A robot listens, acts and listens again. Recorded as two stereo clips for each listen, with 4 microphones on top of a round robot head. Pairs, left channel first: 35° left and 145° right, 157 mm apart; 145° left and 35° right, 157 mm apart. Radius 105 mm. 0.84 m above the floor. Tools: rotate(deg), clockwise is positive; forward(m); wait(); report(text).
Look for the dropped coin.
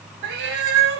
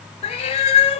wait()
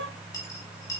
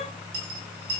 rotate(35)
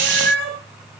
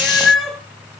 report("I heard a dropped coin from this way, but can't make it out now.")